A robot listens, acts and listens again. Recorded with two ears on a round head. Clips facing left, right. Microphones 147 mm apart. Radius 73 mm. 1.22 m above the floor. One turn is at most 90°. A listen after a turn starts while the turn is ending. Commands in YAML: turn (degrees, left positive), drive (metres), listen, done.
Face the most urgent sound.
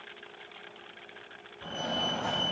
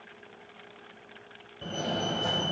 turn: -45
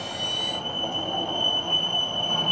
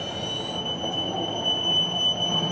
turn: -10
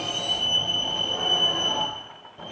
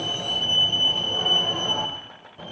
done: "Found it: a fire alarm, straight ahead, 1 to 2 m away."